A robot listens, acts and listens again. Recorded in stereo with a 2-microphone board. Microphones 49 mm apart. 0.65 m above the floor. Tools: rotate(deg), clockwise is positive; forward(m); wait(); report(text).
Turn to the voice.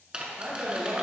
rotate(50)
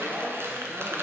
rotate(65)
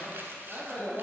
rotate(15)
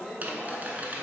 report("Found it: a man speaking, straight ahead, 1 to 2 m away.")